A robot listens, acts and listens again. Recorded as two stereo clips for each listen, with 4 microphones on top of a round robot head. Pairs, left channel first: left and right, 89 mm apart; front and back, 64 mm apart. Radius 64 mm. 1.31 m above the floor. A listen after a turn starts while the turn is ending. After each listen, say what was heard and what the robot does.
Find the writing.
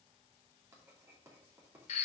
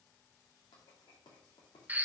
The writing: 25° right. Turn 25° right.
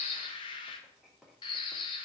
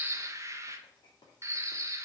Facing the writing.